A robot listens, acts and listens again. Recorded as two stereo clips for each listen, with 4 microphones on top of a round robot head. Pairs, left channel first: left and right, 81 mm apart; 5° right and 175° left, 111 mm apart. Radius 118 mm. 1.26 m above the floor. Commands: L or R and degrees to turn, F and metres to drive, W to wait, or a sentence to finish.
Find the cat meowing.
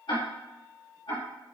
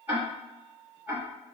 W
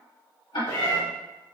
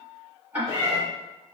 L110
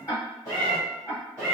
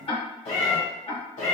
L20
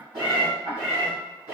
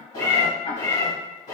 R10
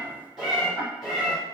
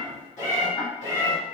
Facing the cat meowing, 2 to 4 m away.